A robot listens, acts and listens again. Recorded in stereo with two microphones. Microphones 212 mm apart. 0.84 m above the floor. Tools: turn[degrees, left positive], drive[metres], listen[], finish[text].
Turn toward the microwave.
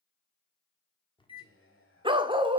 Thought: The microwave: about 25° left or 155° left.
Action: turn[25]
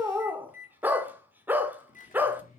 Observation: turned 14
Thought: So it is at 140° left.
Action: turn[140]
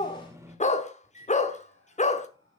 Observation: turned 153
Thought: The microwave is now 15° right.
Action: turn[-15]
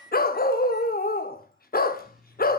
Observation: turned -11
Action: finish[Found it: a microwave, straight ahead.]